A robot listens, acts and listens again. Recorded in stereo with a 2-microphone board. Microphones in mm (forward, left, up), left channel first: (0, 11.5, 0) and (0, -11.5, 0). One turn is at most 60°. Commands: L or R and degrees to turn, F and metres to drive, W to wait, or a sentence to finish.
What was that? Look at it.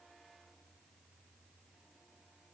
W
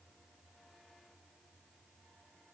W
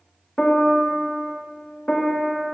L20
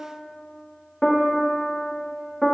Found it: a piano, straight ahead, 1 to 2 m away.